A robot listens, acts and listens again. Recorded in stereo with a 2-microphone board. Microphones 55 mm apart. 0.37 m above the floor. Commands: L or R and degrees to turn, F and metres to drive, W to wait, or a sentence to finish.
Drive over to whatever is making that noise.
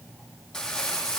L30
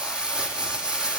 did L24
R15
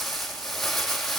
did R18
F1.0
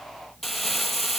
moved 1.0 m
F1.0
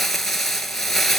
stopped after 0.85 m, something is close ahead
I am next to the crumpling.